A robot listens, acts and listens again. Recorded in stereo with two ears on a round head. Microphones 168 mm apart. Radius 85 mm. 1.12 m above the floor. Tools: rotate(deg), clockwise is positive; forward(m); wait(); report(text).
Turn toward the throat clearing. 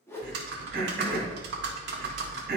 rotate(50)
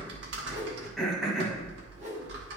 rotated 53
report("Facing the throat clearing.")